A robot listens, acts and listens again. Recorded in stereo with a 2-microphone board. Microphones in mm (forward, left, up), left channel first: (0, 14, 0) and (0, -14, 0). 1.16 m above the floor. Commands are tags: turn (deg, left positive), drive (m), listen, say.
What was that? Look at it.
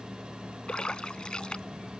<turn deg="35"/>
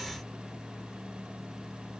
<listen/>
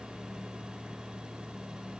<say>I heard a splash, but can't make it out now. It was about straight ahead or 110° left.</say>